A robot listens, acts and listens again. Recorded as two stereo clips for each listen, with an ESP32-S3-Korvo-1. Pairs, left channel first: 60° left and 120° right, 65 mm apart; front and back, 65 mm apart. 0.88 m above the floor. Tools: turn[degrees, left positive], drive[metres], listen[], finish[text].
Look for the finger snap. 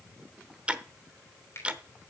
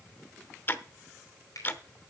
Thought: The finger snap: 20° left.
Action: turn[20]
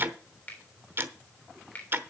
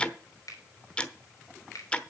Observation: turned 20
Action: finish[Found it: a finger snap, straight ahead, 2 to 4 m away.]